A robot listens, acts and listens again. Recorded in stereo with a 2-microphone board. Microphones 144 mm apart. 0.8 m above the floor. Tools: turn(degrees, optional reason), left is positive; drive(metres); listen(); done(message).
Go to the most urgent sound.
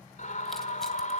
turn(degrees=60, reason="The scream: about 60° left or 120° left.")
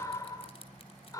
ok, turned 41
turn(degrees=25, reason="So it is at 25° left.")
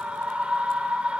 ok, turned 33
turn(degrees=-10, reason="The scream is now 10° right.")
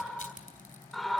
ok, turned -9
drive(metres=1.0)
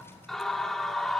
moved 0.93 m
drive(metres=1.0)
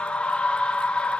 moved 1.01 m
turn(degrees=10, reason="The scream is now 10° left.")
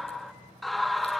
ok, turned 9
drive(metres=1.0)
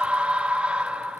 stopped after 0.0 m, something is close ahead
turn(degrees=-10, reason="The scream is now 10° right.")
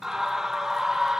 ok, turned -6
done("I am next to the scream.")